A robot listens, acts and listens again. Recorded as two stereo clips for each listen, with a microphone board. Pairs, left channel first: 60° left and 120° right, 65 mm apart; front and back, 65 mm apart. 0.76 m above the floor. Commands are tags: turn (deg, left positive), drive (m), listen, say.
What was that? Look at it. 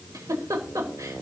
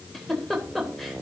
<turn deg="-90"/>
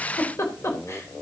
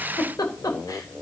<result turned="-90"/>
<turn deg="15"/>
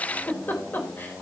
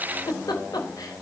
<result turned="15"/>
<say>Found it: a giggle, straight ahead.</say>